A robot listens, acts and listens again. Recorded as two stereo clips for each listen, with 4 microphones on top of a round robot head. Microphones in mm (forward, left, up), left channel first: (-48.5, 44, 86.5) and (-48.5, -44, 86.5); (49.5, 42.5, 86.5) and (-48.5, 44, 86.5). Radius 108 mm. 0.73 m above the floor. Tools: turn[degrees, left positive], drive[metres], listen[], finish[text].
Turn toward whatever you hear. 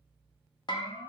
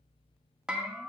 Thought: The bell: 100° left.
Action: turn[100]
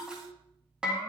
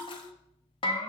Thought: The bell is now 10° right.
Action: turn[-10]
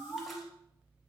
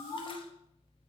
Action: finish[Found it: a bell, straight ahead.]